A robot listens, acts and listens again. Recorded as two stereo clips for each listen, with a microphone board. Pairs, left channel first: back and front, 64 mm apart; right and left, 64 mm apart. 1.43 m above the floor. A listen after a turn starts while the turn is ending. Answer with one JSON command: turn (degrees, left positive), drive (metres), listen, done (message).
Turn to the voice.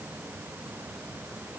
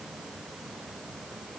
{"listen": true}
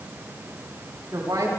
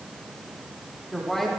{"done": "Facing the woman speaking."}